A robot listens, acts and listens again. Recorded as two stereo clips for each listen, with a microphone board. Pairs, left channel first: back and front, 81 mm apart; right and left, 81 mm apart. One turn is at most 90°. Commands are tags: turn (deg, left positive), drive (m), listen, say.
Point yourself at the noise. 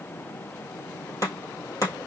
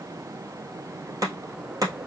<turn deg="90"/>
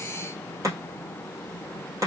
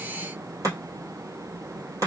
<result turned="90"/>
<turn deg="45"/>
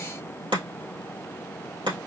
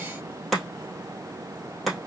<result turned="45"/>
<say>Found it: chopping, straight ahead, 2 to 4 m away.</say>